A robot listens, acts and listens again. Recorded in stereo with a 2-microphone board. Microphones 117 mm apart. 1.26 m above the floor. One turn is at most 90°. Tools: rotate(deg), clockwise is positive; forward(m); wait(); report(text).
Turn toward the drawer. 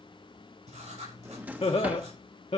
rotate(30)
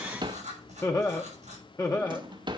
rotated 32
rotate(90)
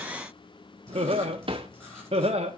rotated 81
rotate(55)
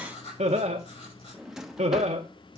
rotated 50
report("Facing the drawer, under 1 m away.")